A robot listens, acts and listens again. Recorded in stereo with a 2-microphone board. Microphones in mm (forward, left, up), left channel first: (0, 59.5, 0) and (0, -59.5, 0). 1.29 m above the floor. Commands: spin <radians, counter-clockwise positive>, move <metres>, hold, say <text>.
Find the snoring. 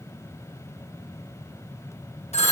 hold
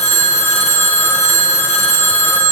hold
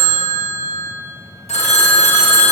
say I can't make out snoring, only a phone ringing.